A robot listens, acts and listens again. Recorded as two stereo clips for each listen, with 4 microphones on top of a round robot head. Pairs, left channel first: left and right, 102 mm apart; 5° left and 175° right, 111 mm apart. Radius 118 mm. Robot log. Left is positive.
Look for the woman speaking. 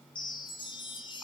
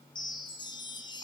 cmd idle
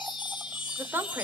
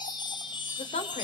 note: The woman speaking: 20° right.
cmd yaw -20
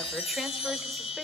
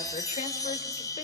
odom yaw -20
cmd idle
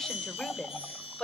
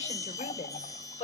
note: The woman speaking is now 10° left.
cmd yaw +10
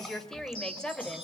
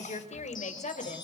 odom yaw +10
note: The woman speaking is now 10° left.
cmd yaw +10
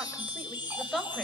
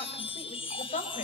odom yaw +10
end: Facing the woman speaking, over 4 m away.